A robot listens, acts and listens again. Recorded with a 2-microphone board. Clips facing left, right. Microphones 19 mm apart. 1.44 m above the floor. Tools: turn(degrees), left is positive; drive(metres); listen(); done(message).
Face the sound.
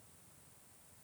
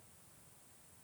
listen()
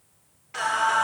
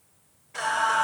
turn(degrees=90)
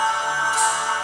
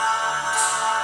done("Facing the singing, over 4 m away.")